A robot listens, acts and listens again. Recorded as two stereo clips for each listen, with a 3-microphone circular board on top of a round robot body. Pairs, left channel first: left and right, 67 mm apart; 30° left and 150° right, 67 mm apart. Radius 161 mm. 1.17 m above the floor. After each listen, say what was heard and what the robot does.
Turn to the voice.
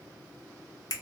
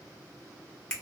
Keep listening.
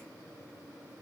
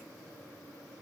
Keep listening.
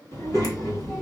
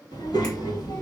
The child speaking: 40° left. Turn 40° left.
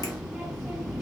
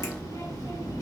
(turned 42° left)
Found it: a child speaking, straight ahead.